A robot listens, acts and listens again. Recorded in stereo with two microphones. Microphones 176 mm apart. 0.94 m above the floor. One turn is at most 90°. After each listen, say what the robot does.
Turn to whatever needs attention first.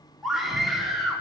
Turn 30° left.
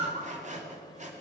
Turn 30° right.
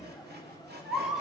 Facing the scream.